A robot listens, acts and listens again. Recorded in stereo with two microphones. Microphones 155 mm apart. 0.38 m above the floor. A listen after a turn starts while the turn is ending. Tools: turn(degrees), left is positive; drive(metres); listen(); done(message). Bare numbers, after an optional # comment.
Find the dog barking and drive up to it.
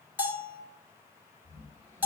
listen()
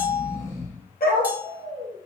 turn(90)
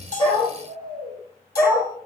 # So it is at 10° left.
turn(10)
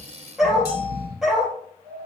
drive(1.0)
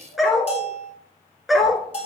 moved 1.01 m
drive(1.0)
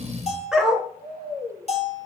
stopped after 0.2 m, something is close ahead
done("I am next to the dog barking.")